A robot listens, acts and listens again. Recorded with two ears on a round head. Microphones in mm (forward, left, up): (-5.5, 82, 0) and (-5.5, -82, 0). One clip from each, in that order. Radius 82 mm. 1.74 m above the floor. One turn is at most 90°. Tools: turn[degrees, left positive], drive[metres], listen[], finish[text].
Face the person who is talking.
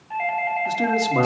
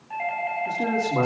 Thought: The man speaking: about 70° left or 110° left.
Action: turn[70]
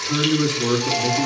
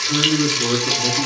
Action: finish[Facing the man speaking.]